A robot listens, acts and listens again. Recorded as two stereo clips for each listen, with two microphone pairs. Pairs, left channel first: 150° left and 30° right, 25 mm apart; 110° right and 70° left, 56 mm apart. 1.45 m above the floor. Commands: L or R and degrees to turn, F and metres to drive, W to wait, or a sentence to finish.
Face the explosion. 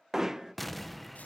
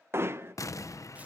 R125
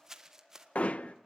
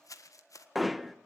I heard an explosion from this way, but can't make it out now.